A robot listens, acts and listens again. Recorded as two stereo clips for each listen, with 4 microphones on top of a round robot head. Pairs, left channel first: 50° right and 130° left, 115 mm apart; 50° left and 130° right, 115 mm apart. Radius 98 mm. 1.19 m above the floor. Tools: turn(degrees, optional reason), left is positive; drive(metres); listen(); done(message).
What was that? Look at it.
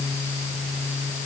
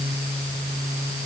listen()
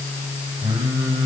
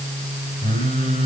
turn(degrees=75, reason="The singing: 75° left.")
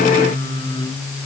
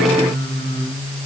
done("Found it: singing, straight ahead, over 4 m away.")